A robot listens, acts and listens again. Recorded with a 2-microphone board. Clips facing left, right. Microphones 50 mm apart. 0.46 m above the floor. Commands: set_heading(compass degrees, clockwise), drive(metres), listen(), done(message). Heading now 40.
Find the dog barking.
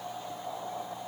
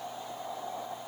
listen()
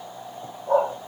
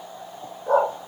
set_heading(110)
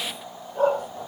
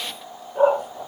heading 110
set_heading(125)
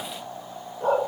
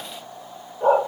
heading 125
set_heading(135)
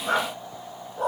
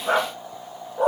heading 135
set_heading(150)
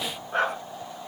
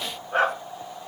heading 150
done("Found it: a dog barking, straight ahead.")